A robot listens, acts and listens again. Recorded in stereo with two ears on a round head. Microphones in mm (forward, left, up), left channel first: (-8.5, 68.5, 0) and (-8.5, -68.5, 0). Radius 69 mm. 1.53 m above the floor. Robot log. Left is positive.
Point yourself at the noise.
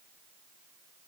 cmd idle
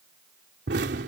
note: The explosion: about 75° right or 105° right.
cmd yaw -75
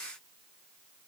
cmd idle
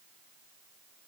end: I heard an explosion, but can't make it out now. It was about straight ahead or 30° right.